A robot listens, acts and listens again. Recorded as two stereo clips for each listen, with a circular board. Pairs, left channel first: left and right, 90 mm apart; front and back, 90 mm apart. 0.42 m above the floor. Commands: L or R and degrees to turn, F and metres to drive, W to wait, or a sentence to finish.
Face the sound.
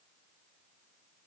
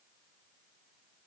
W
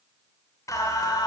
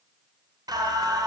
L135
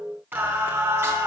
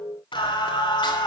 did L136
R30
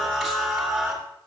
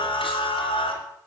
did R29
Found it: singing, straight ahead, 2 to 4 m away.